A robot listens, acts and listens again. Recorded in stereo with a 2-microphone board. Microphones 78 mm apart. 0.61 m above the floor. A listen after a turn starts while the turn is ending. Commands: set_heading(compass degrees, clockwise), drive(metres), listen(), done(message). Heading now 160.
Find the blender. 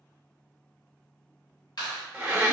set_heading(180)
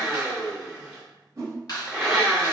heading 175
done("Facing the blender.")